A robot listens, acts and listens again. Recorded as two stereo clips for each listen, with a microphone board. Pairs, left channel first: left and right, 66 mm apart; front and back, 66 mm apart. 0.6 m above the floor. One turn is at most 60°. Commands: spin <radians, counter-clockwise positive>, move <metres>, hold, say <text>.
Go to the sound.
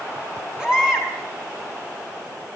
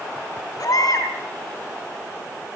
spin -0.17
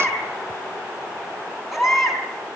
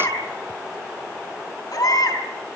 move 1.0
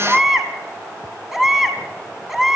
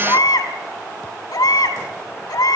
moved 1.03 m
move 1.0
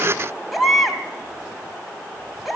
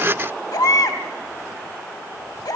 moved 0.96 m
move 1.0
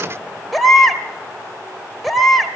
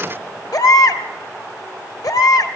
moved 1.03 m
move 1.0
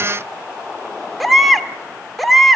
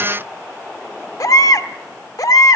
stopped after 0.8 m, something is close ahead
say I am next to the baby crying.